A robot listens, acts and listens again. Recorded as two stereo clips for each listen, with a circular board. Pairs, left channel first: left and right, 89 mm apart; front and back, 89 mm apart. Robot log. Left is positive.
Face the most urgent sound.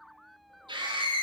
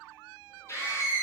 note: The scream: 60° right.
cmd yaw -60
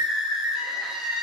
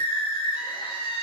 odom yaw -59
end: Found it: a scream, straight ahead, 2 to 4 m away.